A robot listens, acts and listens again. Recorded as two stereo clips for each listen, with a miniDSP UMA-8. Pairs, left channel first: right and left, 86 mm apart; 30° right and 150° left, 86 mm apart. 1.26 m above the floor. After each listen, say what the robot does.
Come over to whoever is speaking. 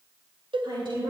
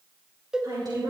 Turn 110° left.
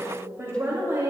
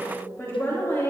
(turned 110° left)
Turn 30° left.
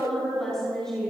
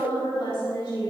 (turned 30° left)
Drive 1.0 m forward.
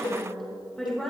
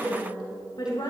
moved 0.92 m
Drive 1.0 m forward.
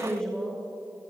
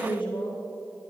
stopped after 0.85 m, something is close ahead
Turn 10° right.
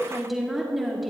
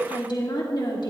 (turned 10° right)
Arrived at the woman speaking, straight ahead.